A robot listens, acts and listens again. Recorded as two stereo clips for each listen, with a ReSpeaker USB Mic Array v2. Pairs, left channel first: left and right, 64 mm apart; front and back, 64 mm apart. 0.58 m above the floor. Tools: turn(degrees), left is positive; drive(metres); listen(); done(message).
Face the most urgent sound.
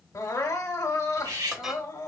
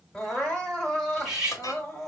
turn(degrees=75)
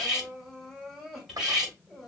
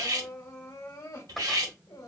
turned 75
done("Found it: crying, straight ahead.")